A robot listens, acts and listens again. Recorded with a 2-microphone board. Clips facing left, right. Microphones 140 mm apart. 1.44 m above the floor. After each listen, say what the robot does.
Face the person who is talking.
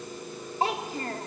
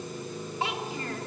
Turn 40° left.
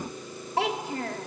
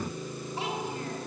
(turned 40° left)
Turn 100° left.
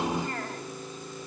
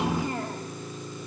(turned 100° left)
Turn 15° right.
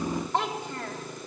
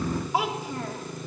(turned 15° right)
Found it: a child speaking, straight ahead.